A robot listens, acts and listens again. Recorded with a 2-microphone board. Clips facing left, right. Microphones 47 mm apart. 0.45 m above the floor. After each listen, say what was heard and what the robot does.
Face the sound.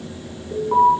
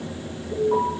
The alarm: about 25° left or 155° left. Turn 25° left.
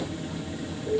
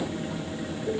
Found it: an alarm, straight ahead.